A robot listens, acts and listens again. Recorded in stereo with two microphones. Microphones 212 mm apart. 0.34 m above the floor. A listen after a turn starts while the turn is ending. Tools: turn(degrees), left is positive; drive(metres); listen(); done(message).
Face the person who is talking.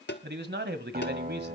turn(degrees=-55)
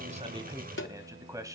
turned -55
turn(degrees=-20)
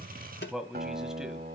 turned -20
done("Facing the man speaking.")